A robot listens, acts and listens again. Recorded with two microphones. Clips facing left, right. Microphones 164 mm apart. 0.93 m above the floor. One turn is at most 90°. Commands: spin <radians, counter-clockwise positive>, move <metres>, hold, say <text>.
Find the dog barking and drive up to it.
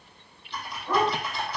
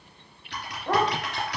spin -0.96
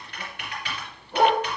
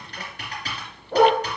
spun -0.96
spin -1.22
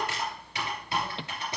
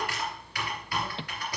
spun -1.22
hold
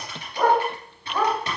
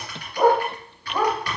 spin -0.17
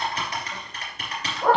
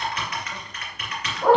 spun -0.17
move 1.0
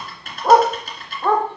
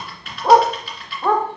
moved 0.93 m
move 1.0
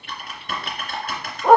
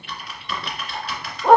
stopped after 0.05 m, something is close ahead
say Arrived at the dog barking, straight ahead.